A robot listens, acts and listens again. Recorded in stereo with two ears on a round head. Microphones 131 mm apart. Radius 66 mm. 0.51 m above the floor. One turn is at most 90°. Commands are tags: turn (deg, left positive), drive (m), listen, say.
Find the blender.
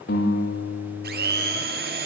<turn deg="-90"/>
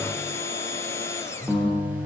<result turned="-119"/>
<turn deg="20"/>
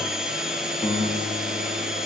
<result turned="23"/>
<say>Found it: a blender, straight ahead, 2 to 4 m away.</say>